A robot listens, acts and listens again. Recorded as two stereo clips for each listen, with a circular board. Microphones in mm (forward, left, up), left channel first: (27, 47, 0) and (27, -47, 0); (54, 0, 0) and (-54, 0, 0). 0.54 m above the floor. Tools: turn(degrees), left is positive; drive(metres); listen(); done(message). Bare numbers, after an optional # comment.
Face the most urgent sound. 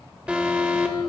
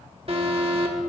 # The alarm: 165° right.
turn(-165)
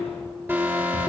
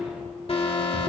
# The alarm is now 20° right.
turn(-20)
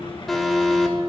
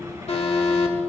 done("Found it: an alarm, straight ahead.")